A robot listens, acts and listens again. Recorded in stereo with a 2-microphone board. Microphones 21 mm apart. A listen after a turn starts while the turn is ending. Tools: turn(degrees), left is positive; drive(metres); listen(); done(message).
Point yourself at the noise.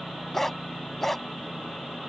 turn(degrees=30)
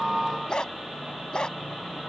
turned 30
turn(degrees=140)
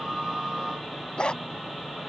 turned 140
turn(degrees=50)
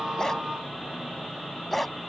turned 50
done("Facing the dog barking.")